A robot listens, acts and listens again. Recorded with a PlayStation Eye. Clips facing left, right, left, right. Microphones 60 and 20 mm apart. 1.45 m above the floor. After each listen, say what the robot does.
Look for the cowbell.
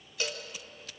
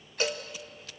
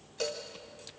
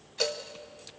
Turn 25° right.
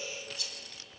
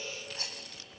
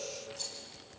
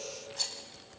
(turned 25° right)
Keep listening.
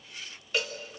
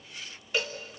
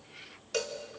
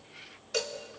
Facing the cowbell.